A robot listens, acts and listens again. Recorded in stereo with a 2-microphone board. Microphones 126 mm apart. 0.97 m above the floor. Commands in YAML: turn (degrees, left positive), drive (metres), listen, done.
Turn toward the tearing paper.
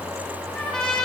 listen: true
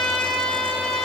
listen: true
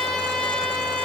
done: "I can't make out tearing paper to turn to."